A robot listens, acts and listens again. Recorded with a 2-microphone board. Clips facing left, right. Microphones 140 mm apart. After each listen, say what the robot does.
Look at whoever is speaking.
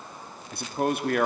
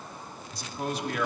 Turn 55° left.
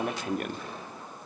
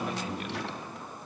Turn 50° left.
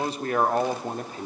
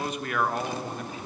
Turn 40° left.
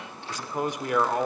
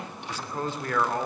Turn 20° left.
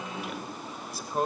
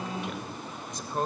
Found it: a man speaking, straight ahead.